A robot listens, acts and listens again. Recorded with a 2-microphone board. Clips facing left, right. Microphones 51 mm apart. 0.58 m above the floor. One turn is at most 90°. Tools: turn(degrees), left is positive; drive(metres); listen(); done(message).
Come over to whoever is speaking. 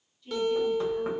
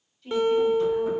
turn(degrees=-60)
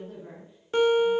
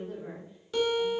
turn(degrees=-10)
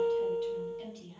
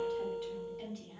drive(metres=1.0)
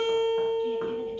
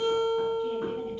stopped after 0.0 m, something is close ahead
listen()
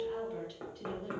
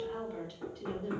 done("Something is in my way. I am facing the woman speaking but have not reached it.")